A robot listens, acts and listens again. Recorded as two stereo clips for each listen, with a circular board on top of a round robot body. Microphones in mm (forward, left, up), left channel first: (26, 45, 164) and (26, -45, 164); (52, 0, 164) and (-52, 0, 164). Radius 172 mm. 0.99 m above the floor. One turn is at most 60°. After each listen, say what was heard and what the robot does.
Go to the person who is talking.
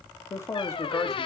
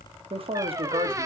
The man speaking: 150° left. Turn 60° left.
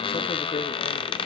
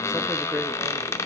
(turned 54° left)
Nothing new. It was at 95° left. Turn 60° left.
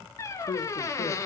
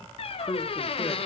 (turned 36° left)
The man speaking is now 65° left. Turn 60° left.
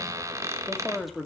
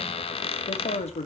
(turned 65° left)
Drive 1.0 m forward.
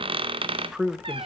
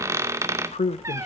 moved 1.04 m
Drive 1.0 m forward.
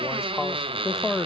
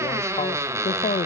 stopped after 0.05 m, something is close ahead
Arrived at the man speaking, straight ahead.